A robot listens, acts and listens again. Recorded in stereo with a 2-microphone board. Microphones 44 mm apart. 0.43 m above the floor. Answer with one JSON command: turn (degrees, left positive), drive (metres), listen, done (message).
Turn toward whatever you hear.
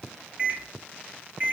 {"turn": -30}
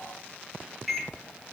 {"done": "Found it: a microwave, straight ahead."}